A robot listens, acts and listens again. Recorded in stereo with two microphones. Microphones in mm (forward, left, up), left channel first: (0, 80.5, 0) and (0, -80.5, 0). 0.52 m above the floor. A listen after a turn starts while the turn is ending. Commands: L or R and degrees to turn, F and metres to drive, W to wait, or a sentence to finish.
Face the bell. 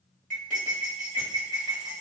W
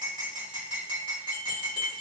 L70
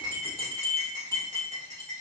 L20
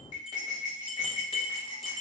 Found it: a bell, straight ahead.